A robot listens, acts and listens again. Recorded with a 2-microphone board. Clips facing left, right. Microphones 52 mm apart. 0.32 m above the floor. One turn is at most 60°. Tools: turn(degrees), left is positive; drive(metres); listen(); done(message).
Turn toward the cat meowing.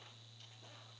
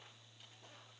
listen()
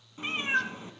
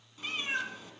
turn(degrees=30)
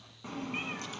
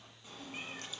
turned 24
turn(degrees=60)
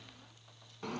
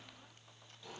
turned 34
turn(degrees=60)
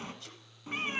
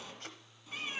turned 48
turn(degrees=45)
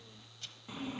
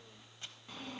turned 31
turn(degrees=15)
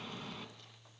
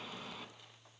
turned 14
done("Facing the cat meowing, under 1 m away.")